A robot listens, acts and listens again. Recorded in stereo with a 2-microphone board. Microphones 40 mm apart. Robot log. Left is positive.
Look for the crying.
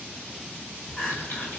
note: The crying: about 20° left or 160° left.
cmd yaw +20
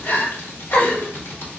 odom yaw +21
note: So it is at 140° left.
cmd yaw +140
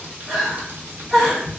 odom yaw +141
end: Found it: crying, straight ahead, 1 to 2 m away.